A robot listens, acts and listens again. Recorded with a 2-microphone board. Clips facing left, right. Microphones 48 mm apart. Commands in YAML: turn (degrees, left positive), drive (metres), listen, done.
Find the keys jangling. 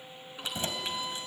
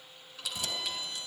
turn: 30
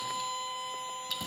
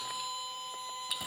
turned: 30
listen: true
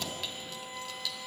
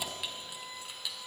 turn: -20
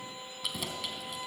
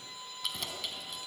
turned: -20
done: "Facing the keys jangling."